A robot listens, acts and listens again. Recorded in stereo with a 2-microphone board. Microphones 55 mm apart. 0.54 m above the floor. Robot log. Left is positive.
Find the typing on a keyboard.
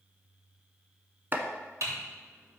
note: The typing on a keyboard: about 65° right or 115° right.
cmd yaw -65
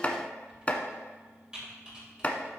note: So it is at 15° right.
cmd yaw -15
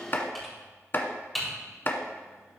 end: Facing the typing on a keyboard, 2 to 4 m away.